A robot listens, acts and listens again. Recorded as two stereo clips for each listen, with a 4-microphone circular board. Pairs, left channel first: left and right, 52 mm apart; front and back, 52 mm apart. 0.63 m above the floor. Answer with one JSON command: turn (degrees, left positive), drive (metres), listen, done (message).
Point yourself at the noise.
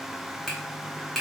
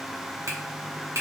{"turn": 175}
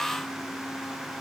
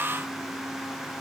{"listen": true}
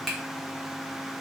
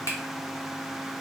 {"done": "Facing the finger snap."}